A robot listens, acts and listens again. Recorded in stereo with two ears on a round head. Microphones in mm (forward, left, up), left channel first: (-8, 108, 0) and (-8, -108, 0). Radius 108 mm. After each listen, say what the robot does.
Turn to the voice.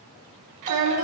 Turn 90° right.
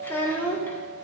Turn 10° left.
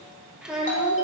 Facing the child speaking, under 1 m away.